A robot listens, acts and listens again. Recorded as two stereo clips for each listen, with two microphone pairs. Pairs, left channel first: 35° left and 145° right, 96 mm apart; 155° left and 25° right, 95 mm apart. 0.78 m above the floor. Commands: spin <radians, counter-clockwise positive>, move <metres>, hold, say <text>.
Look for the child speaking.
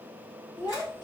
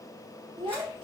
spin -0.26
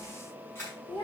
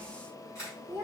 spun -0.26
spin 0.61
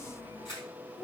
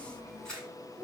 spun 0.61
spin 0.44
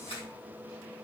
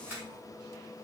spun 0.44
hold
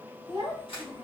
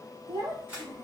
spin 0.44
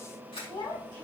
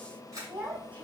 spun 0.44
say Found it: a child speaking, straight ahead, 2 to 4 m away.